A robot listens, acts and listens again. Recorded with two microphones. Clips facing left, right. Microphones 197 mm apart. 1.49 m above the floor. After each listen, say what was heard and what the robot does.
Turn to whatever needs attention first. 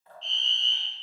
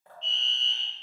The fire alarm: about 55° right or 125° right. Turn 55° right.
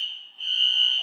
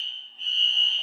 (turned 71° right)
So it is at 30° right. Turn 30° right.
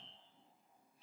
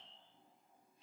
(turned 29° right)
Found it: a fire alarm, straight ahead, 1 to 2 m away.